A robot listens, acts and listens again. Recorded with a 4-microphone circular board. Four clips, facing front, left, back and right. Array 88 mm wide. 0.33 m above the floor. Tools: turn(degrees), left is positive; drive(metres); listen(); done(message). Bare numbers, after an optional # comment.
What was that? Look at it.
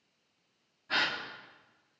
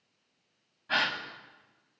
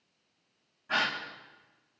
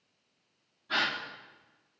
# The gasp: 115° left.
turn(115)
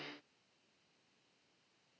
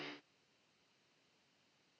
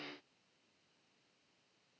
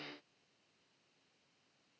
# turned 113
done("Facing where the gasp came from. I can't hear it now.")